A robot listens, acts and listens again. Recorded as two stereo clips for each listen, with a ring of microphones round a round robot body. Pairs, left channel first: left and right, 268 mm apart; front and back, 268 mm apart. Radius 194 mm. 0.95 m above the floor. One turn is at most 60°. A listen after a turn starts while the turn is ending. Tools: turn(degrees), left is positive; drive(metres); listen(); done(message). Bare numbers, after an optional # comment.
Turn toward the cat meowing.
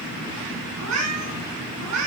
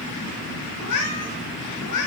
# The cat meowing: 40° right.
turn(-40)
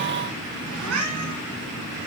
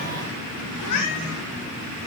# The cat meowing is now 35° right.
turn(-35)
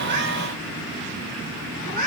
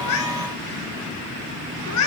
done("Found it: a cat meowing, straight ahead.")